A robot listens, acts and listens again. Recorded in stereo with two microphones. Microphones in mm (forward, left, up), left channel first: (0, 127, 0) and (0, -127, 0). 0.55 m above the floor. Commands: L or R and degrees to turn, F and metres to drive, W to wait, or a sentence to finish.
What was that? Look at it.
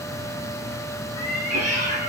R90
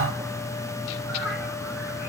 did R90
W
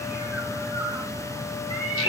R10
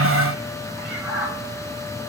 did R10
Found it: a cat meowing, straight ahead, over 4 m away.